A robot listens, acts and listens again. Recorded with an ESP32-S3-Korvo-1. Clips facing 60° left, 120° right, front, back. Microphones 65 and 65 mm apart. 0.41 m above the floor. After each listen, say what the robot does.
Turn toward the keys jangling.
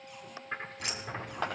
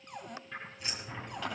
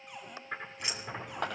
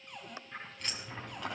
Turn 80° left.
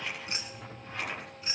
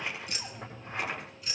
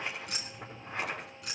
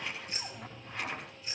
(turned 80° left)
Facing the keys jangling, 2 to 4 m away.